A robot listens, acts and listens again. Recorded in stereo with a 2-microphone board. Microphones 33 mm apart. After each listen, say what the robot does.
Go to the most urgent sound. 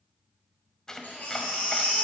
Turn 55° left.
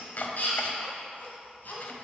Turn 70° left.
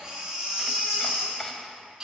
Turn 15° right.
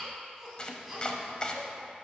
Drive 1.0 m forward.
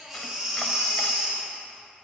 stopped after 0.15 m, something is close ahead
Blocked. The baby crying is further on, straight ahead.